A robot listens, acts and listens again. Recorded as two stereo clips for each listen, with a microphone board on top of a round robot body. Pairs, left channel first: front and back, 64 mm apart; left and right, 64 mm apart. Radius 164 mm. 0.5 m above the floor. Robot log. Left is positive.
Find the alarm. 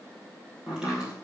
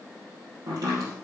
cmd idle
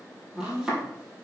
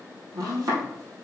cmd idle
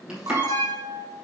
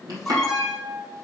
note: The alarm: 175° left.
cmd yaw +175
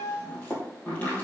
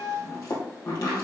note: The alarm is now 15° right.
cmd yaw -15
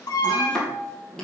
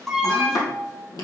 end: Facing the alarm, 2 to 4 m away.